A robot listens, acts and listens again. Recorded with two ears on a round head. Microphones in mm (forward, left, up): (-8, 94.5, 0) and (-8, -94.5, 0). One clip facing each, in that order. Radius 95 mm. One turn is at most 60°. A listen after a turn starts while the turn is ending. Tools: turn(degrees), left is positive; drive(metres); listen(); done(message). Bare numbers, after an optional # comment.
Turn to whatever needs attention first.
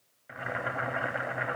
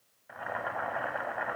listen()
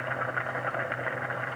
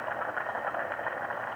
listen()
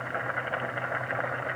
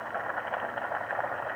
done("I can't make out anything urgent to turn to.")